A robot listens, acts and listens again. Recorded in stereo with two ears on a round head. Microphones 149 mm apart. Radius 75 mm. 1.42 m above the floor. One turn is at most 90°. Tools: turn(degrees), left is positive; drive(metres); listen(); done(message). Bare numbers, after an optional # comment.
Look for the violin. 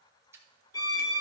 # The violin: about 25° left or 155° left.
turn(25)
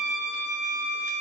done("Found it: a violin, straight ahead.")